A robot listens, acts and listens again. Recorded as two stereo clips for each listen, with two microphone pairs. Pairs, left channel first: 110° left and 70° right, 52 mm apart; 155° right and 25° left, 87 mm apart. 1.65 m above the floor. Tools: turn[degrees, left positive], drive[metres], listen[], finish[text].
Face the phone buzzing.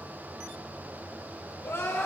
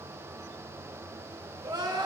Action: listen[]
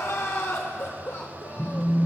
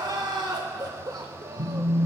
Action: finish[Facing the phone buzzing, 1 to 2 m away.]